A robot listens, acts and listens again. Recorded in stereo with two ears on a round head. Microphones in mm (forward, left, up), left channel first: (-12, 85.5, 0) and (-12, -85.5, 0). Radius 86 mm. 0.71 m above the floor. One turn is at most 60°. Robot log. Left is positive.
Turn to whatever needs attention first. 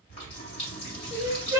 note: The crying: about 20° right or 160° right.
cmd yaw -20
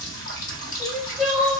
end: Found it: crying, straight ahead, under 1 m away.